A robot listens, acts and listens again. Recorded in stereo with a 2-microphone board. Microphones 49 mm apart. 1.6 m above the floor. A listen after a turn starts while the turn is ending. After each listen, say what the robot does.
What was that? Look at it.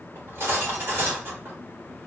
Turn 55° right.
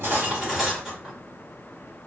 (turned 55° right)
Turn 15° right.
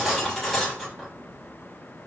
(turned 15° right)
Facing the cutlery clinking, 1 to 2 m away.